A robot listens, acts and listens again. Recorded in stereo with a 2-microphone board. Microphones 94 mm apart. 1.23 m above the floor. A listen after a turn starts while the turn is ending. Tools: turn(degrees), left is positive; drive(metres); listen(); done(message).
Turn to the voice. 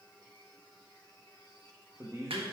turn(degrees=-35)
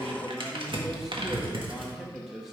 done("Facing the man speaking, 2 to 4 m away.")